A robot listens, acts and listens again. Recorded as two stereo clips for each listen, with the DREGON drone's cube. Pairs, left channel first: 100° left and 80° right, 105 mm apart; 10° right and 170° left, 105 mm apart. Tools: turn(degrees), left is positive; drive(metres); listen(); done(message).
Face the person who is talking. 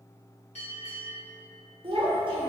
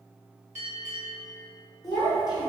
turn(degrees=-50)
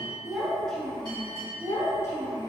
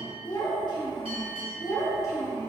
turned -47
turn(degrees=45)
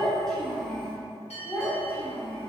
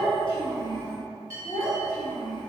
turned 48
turn(degrees=30)
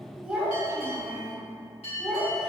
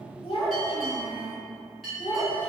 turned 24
done("Facing the child speaking.")